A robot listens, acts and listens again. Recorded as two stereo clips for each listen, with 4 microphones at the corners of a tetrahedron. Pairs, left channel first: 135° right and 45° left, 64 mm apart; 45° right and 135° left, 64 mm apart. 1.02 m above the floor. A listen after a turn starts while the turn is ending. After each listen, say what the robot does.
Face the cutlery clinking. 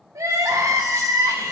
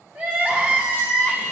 Keep listening.
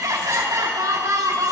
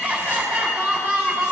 Keep listening.
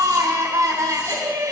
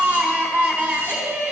I can't make out cutlery clinking, only crying.